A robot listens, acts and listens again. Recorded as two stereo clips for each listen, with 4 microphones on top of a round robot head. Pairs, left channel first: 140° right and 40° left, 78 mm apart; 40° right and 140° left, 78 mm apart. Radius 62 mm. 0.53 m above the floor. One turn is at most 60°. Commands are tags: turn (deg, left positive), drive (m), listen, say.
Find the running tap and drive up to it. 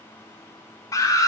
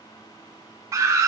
<listen/>
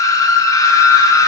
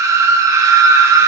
<listen/>
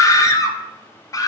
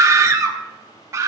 <say>I can't make out a running tap to turn to.</say>